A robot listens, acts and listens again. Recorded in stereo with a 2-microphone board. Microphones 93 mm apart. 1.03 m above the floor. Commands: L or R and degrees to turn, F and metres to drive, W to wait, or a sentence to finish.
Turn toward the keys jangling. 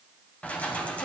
L30
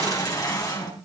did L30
L140
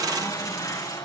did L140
L35
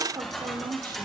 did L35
Found it: keys jangling, straight ahead, over 4 m away.